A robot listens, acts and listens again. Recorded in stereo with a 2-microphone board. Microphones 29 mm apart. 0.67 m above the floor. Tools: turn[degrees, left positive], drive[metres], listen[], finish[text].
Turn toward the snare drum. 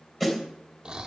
Action: turn[30]
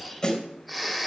Thought: So it is at 145° left.
Action: turn[145]
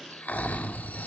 Action: listen[]
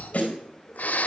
Thought: The snare drum is now 55° left.
Action: turn[55]
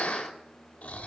Action: listen[]
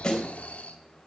Thought: The snare drum is now 25° left.
Action: turn[25]
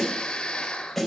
Action: finish[Found it: a snare drum, straight ahead, 2 to 4 m away.]